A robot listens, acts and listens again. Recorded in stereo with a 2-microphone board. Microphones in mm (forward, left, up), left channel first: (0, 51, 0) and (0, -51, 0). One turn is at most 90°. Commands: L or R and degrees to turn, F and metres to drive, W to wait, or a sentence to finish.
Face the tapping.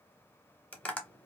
L30
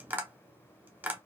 R20
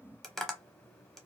Found it: tapping, straight ahead, under 1 m away.